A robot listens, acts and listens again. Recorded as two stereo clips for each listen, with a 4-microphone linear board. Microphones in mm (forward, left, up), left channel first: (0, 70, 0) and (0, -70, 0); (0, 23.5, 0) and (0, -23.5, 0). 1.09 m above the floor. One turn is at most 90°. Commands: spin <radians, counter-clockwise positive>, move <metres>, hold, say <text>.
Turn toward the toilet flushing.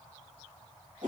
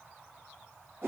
hold
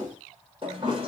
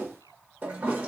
spin -0.70
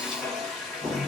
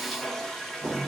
say Found it: a toilet flushing, straight ahead.